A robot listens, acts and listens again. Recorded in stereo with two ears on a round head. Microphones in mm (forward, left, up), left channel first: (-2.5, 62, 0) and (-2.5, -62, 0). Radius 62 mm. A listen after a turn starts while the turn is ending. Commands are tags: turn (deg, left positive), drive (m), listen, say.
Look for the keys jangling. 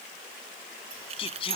<turn deg="-45"/>
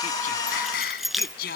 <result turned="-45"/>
<say>Facing the keys jangling.</say>